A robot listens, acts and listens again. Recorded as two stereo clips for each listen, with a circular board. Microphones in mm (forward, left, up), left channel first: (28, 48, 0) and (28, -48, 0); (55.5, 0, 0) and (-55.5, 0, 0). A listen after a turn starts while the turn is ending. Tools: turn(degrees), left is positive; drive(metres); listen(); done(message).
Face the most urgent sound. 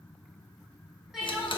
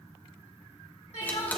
done("Found it: crying, straight ahead, 2 to 4 m away.")